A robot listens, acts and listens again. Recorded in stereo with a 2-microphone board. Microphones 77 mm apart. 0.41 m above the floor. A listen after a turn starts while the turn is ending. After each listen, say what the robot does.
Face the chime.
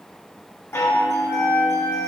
Turn 30° left.
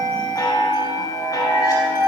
Turn 110° left.
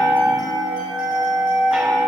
Turn 10° right.
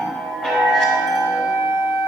Found it: a chime, straight ahead.